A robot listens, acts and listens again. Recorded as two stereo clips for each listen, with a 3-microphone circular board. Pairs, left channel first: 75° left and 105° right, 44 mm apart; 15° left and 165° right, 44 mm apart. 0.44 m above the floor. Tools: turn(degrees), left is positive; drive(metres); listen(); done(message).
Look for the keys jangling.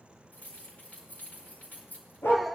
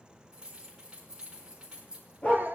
turn(degrees=120)
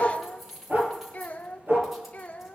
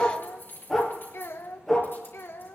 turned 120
turn(degrees=-20)
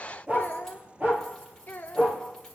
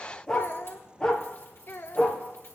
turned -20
listen()
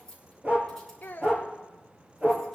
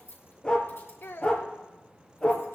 done("Found it: keys jangling, straight ahead.")